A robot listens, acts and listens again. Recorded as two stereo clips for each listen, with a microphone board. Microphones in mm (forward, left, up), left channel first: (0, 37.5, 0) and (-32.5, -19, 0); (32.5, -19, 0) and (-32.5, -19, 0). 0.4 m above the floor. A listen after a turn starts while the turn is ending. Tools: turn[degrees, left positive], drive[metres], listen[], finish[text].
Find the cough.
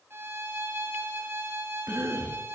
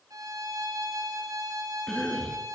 Thought: The cough: 75° right.
Action: turn[-75]
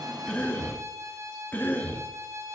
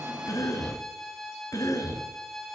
Action: finish[Found it: a cough, straight ahead.]